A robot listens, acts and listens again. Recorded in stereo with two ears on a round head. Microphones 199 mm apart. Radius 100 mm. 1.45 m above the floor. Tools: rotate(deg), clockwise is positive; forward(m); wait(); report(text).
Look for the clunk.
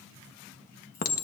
wait()
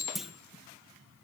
rotate(-30)
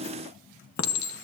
wait()
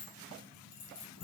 report("I heard a clunk, but can't make it out now. It was about 30° right or 150° left.")